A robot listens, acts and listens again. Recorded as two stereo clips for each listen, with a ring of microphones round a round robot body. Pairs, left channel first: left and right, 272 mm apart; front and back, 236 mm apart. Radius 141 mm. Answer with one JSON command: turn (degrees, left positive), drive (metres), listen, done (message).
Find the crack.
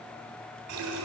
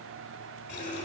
{"listen": true}
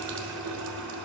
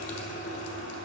{"listen": true}
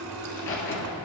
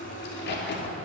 {"turn": 40}
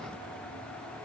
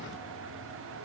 {"done": "I heard a crack from this way, but can't make it out now."}